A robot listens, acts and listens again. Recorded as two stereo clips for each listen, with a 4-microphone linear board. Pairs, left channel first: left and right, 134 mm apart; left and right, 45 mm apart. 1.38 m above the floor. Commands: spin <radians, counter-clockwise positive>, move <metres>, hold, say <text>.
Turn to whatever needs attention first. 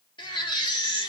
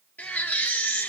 spin 0.61
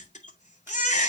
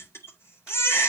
spin 1.92
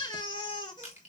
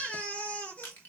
spin 0.61
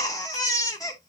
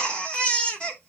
spin 0.44
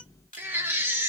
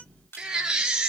spin -0.26
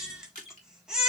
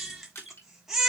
say Found it: a baby crying, straight ahead, 2 to 4 m away.